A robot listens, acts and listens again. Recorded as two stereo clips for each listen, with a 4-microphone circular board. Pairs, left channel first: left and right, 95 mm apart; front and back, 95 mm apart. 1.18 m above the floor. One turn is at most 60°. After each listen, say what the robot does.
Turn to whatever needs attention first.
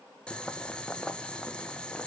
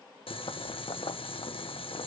Keep listening.
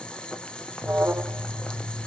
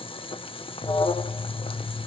Turn 20° right.
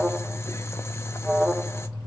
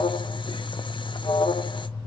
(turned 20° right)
Facing the alarm, under 1 m away.